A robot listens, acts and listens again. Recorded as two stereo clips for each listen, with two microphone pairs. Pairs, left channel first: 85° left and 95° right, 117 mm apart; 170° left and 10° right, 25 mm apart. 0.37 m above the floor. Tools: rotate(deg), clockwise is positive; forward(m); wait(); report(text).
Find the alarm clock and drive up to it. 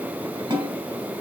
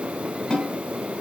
wait()
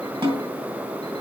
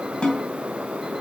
wait()
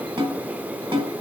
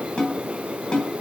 report("I can't make out an alarm clock, only a snare drum.")